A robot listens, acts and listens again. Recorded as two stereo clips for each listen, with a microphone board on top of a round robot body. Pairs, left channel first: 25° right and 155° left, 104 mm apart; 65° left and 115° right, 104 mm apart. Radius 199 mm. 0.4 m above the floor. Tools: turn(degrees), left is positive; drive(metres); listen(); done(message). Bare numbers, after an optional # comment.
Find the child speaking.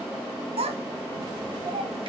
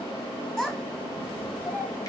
# The child speaking: 145° left.
turn(145)
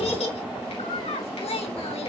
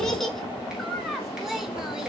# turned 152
# The child speaking is now 25° right.
turn(-25)
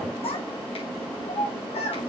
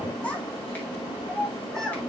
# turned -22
# The child speaking is now 20° right.
turn(-20)
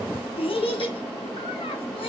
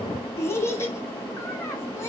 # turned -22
done("Facing the child speaking.")